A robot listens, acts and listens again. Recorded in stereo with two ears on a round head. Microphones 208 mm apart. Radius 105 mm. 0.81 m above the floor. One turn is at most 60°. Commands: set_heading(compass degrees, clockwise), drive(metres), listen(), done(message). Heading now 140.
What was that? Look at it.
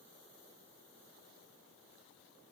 listen()
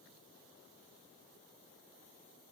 listen()
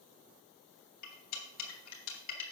set_heading(80)
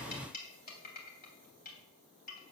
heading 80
set_heading(40)
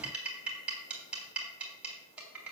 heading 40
done("Found it: cutlery clinking, straight ahead.")